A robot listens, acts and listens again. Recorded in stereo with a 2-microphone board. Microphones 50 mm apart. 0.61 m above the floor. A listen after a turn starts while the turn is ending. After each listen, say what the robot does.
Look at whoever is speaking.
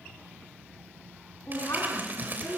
Turn 75° left.
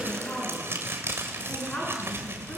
Turn 30° left.
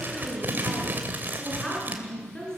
Turn 15° left.
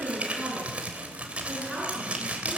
Facing the woman speaking.